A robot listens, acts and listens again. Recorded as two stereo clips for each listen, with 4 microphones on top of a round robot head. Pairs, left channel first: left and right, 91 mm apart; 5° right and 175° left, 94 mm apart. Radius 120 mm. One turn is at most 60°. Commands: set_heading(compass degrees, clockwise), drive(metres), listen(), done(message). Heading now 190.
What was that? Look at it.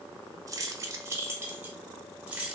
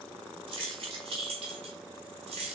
set_heading(250)
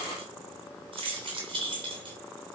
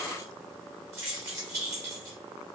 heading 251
set_heading(311)
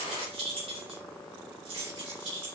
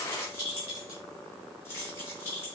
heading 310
set_heading(10)
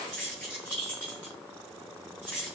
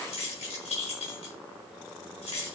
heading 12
set_heading(22)
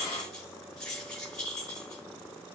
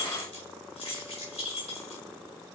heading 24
done("Facing the keys jangling, over 4 m away.")